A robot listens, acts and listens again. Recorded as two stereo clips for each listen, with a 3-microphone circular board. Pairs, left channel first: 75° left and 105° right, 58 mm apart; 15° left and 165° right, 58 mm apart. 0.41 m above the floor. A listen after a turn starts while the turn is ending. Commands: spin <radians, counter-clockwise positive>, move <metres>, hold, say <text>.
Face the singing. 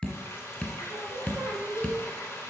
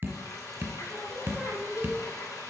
spin -1.22
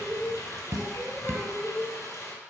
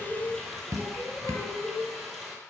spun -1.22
spin 0.44
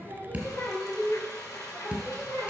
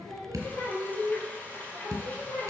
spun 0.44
spin 0.17
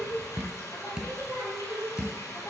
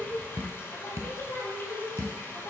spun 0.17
say Found it: singing, straight ahead, 2 to 4 m away.